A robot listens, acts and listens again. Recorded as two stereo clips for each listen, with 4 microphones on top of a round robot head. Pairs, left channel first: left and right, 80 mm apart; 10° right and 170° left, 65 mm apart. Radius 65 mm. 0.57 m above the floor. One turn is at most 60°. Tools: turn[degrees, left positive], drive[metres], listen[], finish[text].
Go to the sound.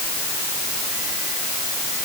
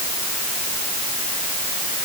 Action: listen[]
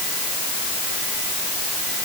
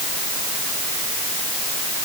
Action: listen[]
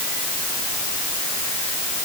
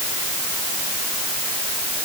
Action: finish[I can't make out anything to turn to.]